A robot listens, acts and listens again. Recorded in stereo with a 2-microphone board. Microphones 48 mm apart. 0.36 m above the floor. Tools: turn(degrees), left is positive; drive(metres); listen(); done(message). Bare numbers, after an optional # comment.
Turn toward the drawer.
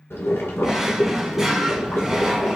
turn(-30)
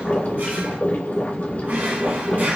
# So it is at 140° right.
turn(-140)
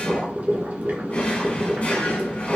# The drawer is now 35° left.
turn(35)
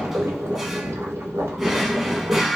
done("Found it: a drawer, straight ahead.")